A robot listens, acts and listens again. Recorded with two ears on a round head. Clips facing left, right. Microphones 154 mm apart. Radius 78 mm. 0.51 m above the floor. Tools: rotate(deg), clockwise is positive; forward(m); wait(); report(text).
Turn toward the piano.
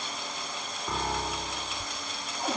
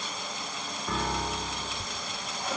rotate(-30)
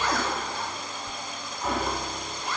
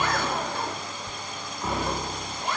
wait()
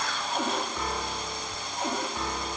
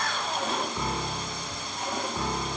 rotate(10)
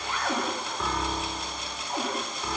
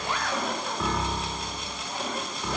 report("Found it: a piano, straight ahead, 1 to 2 m away.")